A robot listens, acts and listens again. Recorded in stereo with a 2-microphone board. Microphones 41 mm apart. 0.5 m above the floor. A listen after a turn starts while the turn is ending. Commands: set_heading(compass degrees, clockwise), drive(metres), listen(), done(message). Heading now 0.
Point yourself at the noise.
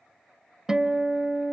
set_heading(30)
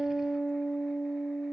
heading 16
done("Found it: a guitar, straight ahead.")